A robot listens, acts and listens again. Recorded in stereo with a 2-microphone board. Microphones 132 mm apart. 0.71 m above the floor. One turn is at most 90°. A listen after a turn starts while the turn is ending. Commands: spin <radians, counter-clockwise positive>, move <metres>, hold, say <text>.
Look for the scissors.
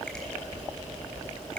hold
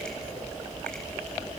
hold
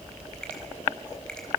say I can't make out scissors.